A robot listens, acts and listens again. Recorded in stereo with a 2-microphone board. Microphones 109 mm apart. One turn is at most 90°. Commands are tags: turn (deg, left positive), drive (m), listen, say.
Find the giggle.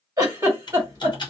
<turn deg="-30"/>
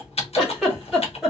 <say>Found it: a giggle, straight ahead.</say>